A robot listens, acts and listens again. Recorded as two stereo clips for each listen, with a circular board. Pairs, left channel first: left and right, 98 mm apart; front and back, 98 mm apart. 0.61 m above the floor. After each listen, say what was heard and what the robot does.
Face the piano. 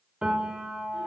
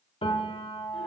The piano: 10° right. Turn 10° right.
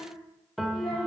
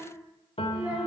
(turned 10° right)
Facing the piano, 1 to 2 m away.